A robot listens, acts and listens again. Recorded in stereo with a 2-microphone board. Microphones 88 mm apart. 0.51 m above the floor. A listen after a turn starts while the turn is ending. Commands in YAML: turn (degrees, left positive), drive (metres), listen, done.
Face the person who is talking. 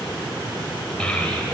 turn: 30
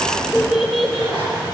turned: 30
turn: 30
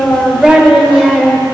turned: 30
done: "Found it: a child speaking, straight ahead."